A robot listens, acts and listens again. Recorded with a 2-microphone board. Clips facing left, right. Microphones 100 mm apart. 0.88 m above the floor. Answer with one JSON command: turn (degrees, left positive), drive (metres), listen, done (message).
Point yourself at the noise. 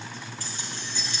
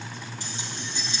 {"turn": -25}
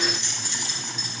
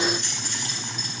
{"turn": -125}
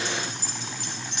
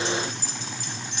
{"turn": 60}
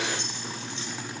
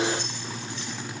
{"listen": true}
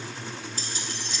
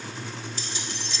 {"turn": 50}
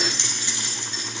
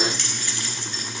{"turn": 25}
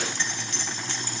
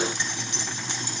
{"turn": -15}
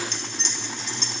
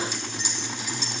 {"turn": -10}
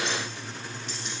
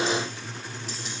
{"listen": true}
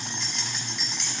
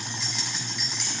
{"done": "Found it: keys jangling, straight ahead."}